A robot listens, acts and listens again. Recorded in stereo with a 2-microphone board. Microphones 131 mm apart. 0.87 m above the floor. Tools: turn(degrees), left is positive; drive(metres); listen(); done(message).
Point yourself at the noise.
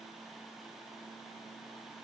listen()
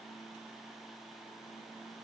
listen()
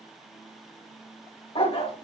turn(degrees=50)
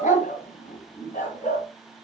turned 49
turn(degrees=70)
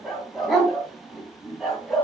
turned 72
done("Found it: a dog barking, straight ahead.")